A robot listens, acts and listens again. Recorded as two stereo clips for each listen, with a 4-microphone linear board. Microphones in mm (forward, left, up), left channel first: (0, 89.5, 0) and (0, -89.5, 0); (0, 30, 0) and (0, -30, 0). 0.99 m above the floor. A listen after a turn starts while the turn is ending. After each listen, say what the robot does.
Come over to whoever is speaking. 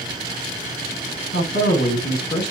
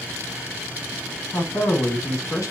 Turn 65° left.
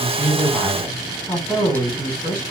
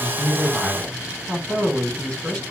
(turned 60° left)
Turn 10° left.
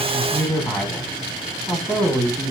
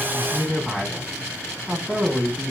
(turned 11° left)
Drive 1.0 m forward.
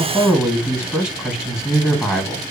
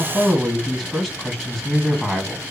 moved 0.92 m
Drive 1.0 m forward.
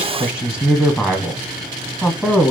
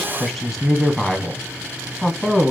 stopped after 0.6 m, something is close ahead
I am next to the man speaking.